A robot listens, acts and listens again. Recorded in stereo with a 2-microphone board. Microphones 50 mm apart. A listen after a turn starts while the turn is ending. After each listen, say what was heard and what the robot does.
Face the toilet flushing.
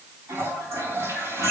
The toilet flushing: about 65° right or 115° right. Turn 65° right.
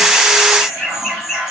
So it is at 50° right. Turn 50° right.
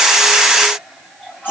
Found it: a toilet flushing, straight ahead.